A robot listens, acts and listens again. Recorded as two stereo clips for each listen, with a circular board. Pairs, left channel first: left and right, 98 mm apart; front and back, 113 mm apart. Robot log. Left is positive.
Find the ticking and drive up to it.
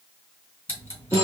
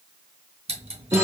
note: The ticking: 165° left.
cmd yaw +165
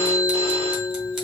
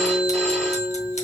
cmd idle
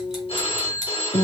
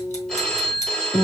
cmd idle
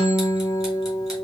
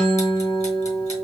end: Facing where the ticking came from. I can't hear it now. I did not reach it.